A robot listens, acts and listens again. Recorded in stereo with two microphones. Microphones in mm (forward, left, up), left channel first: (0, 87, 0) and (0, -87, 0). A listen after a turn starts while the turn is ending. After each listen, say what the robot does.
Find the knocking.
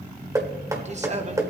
Turn 20° right.
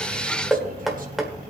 Found it: knocking, straight ahead, 1 to 2 m away.